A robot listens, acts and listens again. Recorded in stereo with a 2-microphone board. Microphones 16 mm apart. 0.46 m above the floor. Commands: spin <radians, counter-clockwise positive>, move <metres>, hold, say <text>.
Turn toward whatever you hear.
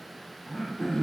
spin 0.87
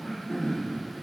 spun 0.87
spin 1.40
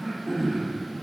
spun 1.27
say Facing the throat clearing.